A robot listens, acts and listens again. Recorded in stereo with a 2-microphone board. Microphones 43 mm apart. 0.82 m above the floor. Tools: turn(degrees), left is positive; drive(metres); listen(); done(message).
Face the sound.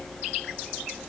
listen()
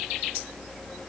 listen()
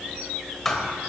turn(degrees=30)
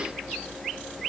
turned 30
listen()
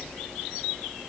done("I heard a thud, but can't make it out now. It was about 20° right or 140° left.")